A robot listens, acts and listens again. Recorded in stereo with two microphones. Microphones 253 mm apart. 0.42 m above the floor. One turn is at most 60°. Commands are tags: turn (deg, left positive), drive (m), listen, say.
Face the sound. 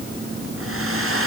<turn deg="-60"/>
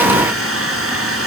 <turn deg="-60"/>
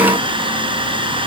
<turn deg="-20"/>
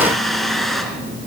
<say>Facing the hair dryer.</say>